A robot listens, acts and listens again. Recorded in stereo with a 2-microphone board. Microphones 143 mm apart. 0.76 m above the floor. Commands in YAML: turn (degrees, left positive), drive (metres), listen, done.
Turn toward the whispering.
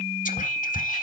turn: 65
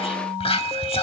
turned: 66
turn: 45
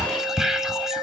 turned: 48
done: "Facing the whispering."